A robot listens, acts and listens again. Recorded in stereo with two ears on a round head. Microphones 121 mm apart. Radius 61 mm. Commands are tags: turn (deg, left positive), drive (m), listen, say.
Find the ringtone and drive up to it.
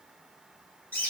<listen/>
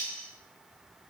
<listen/>
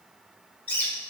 <say>I can't make out a ringtone, only a bird.</say>